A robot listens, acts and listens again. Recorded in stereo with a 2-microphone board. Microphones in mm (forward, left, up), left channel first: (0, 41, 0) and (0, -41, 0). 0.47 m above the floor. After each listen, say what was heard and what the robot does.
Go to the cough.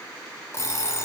Keep listening.
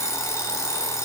Keep listening.
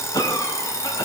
The cough: about 55° left or 125° left. Turn 55° left.
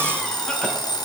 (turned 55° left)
Keep listening.
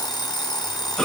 Drive 1.0 m forward.
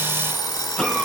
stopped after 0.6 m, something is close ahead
The cough is now 10° left. Turn 10° left.
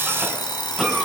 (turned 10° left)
Blocked. The cough is further on, straight ahead.